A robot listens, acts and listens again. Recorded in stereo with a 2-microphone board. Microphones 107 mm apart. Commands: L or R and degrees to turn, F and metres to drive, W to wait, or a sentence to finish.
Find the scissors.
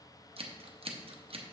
R60
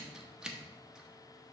Found it: scissors, straight ahead, under 1 m away.